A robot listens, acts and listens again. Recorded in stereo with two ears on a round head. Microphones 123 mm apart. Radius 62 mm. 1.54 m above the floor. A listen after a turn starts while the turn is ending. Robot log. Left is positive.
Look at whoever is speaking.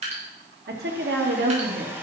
cmd yaw -90
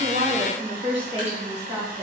note: So it is at 20° right.
cmd yaw -20
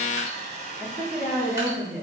note: The woman speaking is now 15° right.
cmd yaw -15
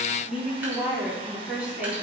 note: The woman speaking is now 10° right.
cmd yaw -10
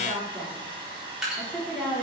end: Facing the woman speaking, over 4 m away.